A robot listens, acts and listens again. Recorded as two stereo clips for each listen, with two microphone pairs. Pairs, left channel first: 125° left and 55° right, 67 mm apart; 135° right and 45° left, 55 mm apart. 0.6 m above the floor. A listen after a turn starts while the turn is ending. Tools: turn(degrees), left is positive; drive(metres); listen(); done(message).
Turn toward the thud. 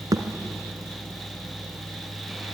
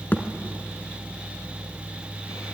turn(degrees=-80)
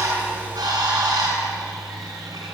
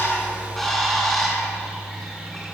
done("I heard a thud from this way, but can't make it out now.")